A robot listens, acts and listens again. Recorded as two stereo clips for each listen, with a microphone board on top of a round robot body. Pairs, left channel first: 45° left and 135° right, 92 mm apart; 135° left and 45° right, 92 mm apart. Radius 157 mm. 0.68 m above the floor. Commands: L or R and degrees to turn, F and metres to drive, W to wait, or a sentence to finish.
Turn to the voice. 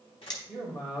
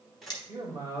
L10
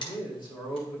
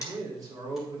Found it: a man speaking, straight ahead.